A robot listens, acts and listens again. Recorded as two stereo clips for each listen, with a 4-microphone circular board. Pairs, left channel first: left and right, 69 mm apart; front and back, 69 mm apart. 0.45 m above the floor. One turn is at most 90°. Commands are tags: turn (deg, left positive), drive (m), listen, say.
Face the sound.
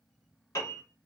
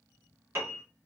<turn deg="90"/>
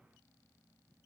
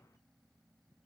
<turn deg="45"/>
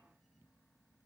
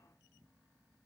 <listen/>
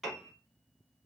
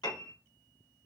<say>Found it: a piano, straight ahead.</say>